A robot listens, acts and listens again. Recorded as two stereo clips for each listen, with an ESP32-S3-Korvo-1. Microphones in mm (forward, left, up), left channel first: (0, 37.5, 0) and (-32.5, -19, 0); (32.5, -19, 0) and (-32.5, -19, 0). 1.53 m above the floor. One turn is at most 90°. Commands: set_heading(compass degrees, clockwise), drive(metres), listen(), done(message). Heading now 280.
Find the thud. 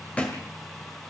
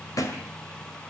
done("Facing the thud.")